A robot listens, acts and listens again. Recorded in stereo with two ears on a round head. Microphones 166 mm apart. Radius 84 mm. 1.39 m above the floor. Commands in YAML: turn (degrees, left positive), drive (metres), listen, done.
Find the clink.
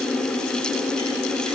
listen: true
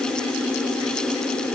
listen: true
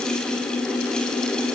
done: "I can't make out a clink."